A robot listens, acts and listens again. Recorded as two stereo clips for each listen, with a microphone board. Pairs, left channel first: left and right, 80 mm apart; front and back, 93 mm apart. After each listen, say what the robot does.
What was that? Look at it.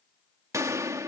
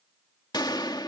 Turn 40° right.
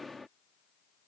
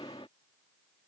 Facing the gunshot.